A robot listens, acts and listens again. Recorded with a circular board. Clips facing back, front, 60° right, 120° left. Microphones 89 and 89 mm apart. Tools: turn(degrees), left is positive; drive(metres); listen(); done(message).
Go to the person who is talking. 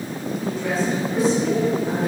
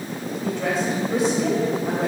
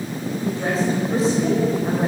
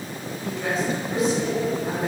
drive(metres=1.0)
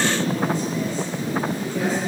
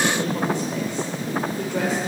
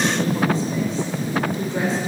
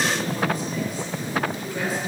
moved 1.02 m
listen()
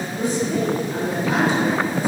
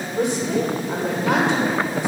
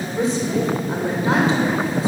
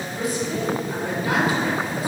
drive(metres=1.0)
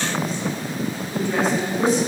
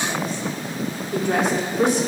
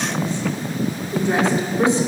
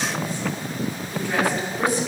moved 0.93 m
drive(metres=1.0)
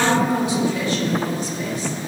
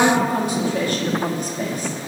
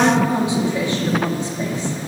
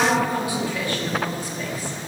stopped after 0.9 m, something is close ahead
done("I am next to the woman speaking.")